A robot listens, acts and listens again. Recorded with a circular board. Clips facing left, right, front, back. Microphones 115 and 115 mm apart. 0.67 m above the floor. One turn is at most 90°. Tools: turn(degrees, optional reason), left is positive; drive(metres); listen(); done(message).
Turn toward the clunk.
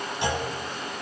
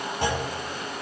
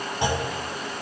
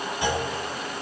turn(degrees=-50, reason="The clunk: 50° right.")
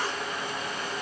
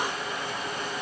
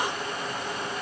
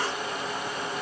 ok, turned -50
done("I heard a clunk from this way, but can't make it out now.")